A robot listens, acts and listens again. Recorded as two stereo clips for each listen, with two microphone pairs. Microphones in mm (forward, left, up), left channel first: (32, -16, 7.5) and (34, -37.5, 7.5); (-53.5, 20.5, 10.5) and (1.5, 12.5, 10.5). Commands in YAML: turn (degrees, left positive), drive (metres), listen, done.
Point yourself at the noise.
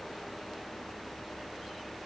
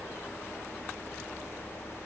listen: true
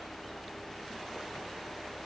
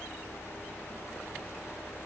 listen: true
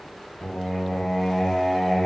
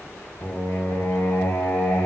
turn: 165
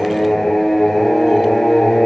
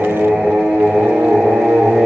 turn: 50
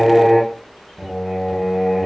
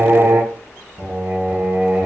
done: "Facing the singing, 2 to 4 m away."